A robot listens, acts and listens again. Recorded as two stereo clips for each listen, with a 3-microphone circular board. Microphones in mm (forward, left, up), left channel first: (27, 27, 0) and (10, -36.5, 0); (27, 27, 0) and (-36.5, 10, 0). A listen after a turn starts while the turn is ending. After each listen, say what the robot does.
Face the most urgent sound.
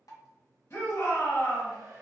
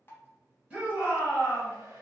Turn 125° left.
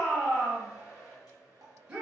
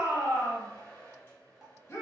Turn 30° right.
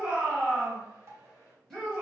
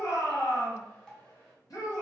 Turn 10° right.
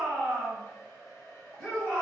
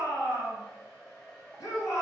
Facing the shout, 1 to 2 m away.